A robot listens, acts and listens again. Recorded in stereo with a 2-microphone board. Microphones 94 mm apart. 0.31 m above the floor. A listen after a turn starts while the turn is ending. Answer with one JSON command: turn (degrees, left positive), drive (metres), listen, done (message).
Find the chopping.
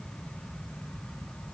{"listen": true}
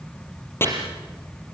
{"turn": 25}
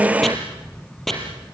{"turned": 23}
{"done": "Facing the chopping, over 4 m away."}